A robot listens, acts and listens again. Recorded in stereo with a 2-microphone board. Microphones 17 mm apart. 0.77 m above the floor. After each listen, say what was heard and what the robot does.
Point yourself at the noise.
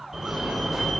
The fire alarm: about 30° right or 150° right. Turn 30° right.
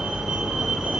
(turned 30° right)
So it is at 115° right. Turn 115° right.
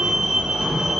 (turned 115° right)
The fire alarm is now 35° right. Turn 35° right.
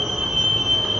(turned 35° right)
The fire alarm is now 10° right. Turn 10° right.
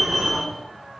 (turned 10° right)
Found it: a fire alarm, straight ahead, 2 to 4 m away.